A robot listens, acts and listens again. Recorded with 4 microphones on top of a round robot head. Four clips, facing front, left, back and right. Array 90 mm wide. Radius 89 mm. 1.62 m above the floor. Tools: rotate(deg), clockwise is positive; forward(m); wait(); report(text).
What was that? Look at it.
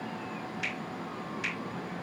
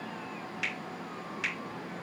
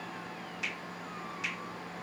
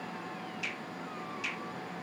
rotate(-85)
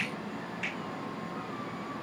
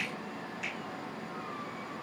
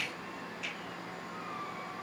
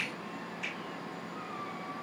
rotate(-35)
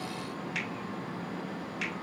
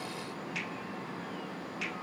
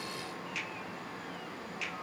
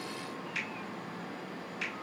rotate(-10)
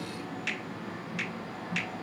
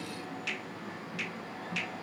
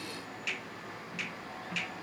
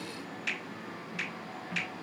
report("Found it: a finger snap, straight ahead, over 4 m away.")